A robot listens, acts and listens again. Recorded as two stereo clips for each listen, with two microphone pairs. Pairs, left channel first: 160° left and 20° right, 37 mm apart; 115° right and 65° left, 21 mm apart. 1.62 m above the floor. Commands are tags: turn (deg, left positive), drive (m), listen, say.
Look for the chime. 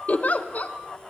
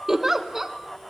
<listen/>
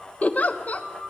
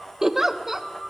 <listen/>
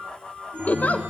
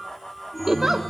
<turn deg="-35"/>
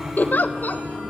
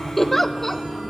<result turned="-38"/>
<say>Found it: a chime, straight ahead, over 4 m away.</say>